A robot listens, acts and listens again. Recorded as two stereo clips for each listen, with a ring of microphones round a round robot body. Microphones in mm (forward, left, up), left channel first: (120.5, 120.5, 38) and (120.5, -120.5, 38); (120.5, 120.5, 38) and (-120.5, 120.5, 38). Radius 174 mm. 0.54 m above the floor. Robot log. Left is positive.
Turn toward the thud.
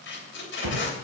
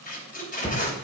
note: The thud: 85° right.
cmd yaw -85
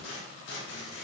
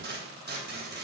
end: I heard a thud from this way, but can't make it out now.